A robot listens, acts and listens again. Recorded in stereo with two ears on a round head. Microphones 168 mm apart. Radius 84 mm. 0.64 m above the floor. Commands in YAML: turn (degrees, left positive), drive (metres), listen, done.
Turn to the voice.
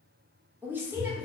turn: -30
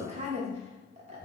turn: -135
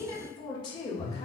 turn: 30
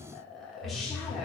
done: "Facing the woman speaking, 1 to 2 m away."